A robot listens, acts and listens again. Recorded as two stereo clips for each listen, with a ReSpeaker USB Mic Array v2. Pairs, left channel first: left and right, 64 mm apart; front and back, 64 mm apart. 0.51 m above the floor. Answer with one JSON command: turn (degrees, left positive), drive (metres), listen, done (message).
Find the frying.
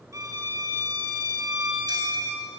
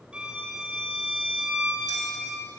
{"listen": true}
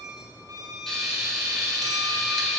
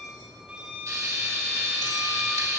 {"turn": 175}
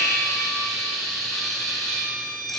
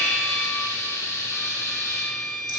{"done": "Facing the frying."}